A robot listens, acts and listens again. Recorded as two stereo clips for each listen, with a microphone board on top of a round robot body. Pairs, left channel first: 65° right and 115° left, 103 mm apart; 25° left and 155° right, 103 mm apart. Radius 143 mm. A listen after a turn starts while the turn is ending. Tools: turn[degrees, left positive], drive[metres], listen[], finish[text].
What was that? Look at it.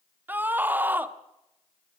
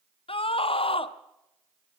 Thought: The scream: 40° left.
Action: turn[40]
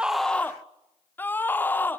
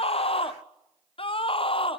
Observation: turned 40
Action: finish[Facing the scream.]